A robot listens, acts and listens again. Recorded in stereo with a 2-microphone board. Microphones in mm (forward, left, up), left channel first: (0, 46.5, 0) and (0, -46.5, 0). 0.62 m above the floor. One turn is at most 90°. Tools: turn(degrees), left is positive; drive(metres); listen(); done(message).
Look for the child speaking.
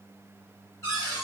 listen()
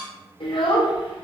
turn(degrees=65)
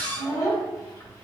turn(degrees=40)
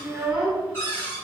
turn(degrees=-10)
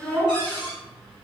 done("Found it: a child speaking, straight ahead, 1 to 2 m away.")